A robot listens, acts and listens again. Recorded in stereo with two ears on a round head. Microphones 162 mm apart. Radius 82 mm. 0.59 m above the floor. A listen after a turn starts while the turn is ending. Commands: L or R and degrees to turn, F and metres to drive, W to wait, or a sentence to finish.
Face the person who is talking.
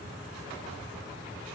W
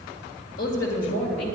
L75
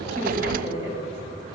L30
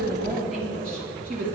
Found it: a woman speaking, straight ahead.